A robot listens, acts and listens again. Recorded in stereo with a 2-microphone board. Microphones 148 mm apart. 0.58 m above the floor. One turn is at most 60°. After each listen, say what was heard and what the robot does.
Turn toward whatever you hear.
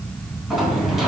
Turn 30° left.
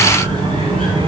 So it is at 30° right. Turn 30° right.
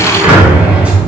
The sliding door is now 10° right. Turn 10° right.
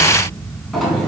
Facing the sliding door.